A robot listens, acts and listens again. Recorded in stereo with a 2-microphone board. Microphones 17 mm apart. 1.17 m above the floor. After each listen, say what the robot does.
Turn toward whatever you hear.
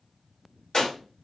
Turn 50° left.
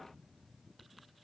Keep listening.
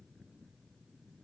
I heard a gunshot, but can't make it out now. It was about straight ahead or 80° left.